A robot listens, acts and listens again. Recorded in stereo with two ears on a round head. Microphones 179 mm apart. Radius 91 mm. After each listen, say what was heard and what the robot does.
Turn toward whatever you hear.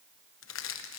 The crushing: about 70° left or 110° left. Turn 70° left.
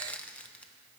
Facing the crushing, 1 to 2 m away.